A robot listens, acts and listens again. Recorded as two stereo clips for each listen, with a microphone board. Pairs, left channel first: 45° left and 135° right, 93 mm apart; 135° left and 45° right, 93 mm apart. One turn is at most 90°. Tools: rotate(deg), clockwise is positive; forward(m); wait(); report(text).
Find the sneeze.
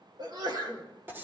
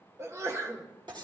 rotate(90)
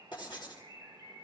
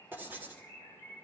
rotate(10)
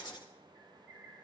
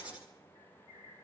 report("Facing where the sneeze came from. I can't hear it now.")